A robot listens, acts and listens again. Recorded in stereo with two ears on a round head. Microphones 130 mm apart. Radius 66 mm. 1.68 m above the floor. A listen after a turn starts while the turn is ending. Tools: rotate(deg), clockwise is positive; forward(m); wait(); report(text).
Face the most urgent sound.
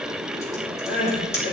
rotate(-60)
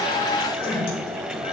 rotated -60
rotate(-40)
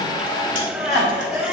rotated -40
report("Facing the crying.")